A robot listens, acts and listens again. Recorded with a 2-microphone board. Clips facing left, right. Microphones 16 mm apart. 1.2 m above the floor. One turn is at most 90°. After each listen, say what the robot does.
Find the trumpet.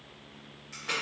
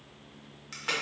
Keep listening.
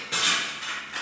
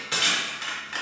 Keep listening.
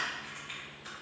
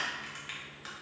I can't make out a trumpet to turn to.